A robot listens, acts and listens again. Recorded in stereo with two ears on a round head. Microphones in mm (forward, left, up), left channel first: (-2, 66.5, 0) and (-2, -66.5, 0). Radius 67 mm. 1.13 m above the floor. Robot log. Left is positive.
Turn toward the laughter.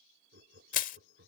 cmd yaw -90
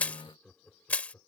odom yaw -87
note: So it is at 15° left.
cmd yaw +15
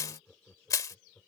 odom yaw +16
note: The laughter is now 10° left.
cmd yaw +10
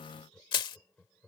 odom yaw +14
note: The laughter is now 10° left.
cmd yaw +10
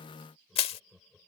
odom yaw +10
end: Facing the laughter.